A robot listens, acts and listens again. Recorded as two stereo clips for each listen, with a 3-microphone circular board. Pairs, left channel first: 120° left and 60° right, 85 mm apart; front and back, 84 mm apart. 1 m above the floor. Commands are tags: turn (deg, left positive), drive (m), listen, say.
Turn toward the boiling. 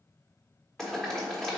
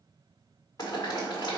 <turn deg="35"/>
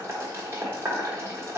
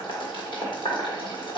<say>Facing the boiling.</say>